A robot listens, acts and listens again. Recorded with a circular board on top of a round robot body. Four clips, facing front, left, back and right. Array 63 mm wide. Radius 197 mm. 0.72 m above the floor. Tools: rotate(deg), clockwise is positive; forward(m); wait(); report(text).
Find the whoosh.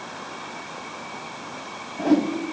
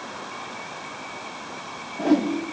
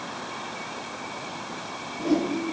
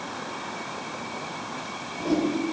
rotate(-45)
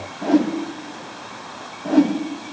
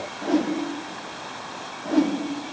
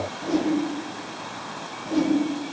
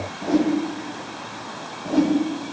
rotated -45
report("Facing the whoosh, 1 to 2 m away.")